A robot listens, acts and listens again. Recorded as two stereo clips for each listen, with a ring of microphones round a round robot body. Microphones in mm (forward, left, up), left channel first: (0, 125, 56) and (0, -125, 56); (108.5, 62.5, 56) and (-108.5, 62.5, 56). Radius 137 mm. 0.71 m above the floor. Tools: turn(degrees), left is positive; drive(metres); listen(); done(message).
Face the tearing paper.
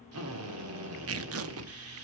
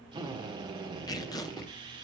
turn(degrees=-75)
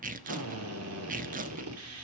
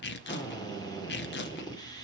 turn(degrees=-35)
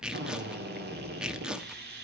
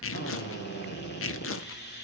done("Facing the tearing paper, under 1 m away.")